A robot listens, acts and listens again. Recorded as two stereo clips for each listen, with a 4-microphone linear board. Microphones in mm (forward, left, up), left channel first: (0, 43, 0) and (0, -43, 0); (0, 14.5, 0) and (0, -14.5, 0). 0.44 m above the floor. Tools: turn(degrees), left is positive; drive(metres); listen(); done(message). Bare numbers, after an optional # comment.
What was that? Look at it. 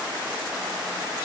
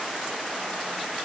listen()
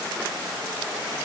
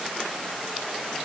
listen()
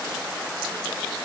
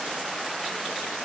done("I can't make out anything to turn to.")